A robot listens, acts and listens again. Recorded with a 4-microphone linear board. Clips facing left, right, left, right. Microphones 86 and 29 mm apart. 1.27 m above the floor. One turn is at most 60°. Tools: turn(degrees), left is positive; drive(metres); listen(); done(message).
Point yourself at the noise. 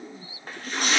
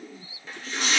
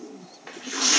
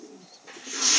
turn(degrees=50)
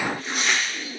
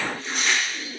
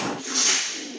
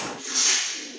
done("Facing the tearing paper.")